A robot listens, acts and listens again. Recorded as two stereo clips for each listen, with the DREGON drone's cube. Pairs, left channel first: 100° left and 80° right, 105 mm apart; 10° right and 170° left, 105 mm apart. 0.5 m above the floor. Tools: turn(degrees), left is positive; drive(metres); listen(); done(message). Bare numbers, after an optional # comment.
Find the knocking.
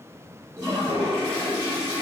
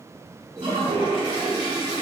listen()
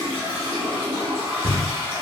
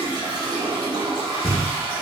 # The knocking: 15° right.
turn(-15)
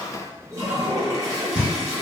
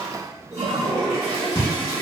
done("Found it: knocking, straight ahead.")